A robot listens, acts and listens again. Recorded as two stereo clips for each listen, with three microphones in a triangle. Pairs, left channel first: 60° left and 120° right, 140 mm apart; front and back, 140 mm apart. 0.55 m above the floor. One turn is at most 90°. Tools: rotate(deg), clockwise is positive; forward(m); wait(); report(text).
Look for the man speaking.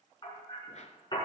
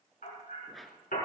wait()
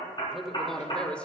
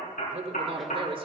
rotate(-90)
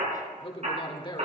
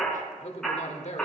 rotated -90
rotate(-10)
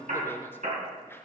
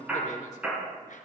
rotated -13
wait()
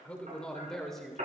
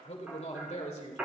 rotate(30)
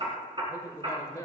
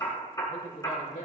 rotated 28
report("Found it: a man speaking, straight ahead, 2 to 4 m away.")